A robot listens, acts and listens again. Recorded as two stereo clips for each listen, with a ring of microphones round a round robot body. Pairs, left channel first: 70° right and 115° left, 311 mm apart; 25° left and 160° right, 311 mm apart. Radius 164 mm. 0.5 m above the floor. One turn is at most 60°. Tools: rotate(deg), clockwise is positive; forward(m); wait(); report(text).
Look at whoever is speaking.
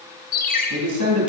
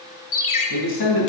rotate(-60)
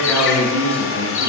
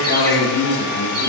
rotate(-20)
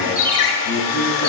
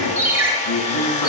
wait()
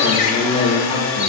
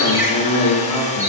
report("Found it: a man speaking, straight ahead, over 4 m away.")